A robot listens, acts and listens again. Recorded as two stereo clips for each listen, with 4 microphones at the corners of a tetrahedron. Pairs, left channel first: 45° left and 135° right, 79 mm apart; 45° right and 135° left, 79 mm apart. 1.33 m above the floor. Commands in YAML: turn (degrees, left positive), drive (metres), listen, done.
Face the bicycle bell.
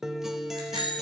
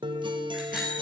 turn: -140
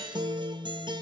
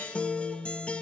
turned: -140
listen: true
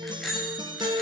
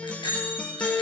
turn: -45
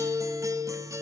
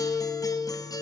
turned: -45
listen: true
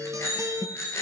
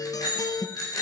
turn: -10
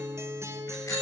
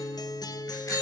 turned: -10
listen: true
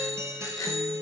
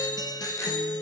done: "Facing the bicycle bell, over 4 m away."